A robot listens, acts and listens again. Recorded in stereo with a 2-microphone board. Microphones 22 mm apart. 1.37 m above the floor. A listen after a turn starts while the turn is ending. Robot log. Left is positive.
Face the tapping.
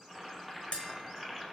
note: The tapping: about 55° left or 125° left.
cmd yaw +55
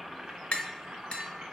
note: So it is at 55° left.
cmd yaw +55
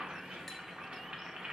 cmd idle
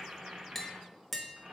end: Found it: tapping, straight ahead.